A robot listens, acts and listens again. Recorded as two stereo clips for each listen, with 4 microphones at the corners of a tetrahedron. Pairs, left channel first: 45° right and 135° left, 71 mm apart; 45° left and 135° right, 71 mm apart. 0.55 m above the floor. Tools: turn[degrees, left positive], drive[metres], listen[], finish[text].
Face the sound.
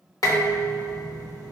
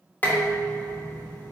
Thought: The dishes clattering: 20° right.
Action: turn[-20]
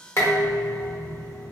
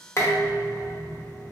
Action: finish[Found it: dishes clattering, straight ahead.]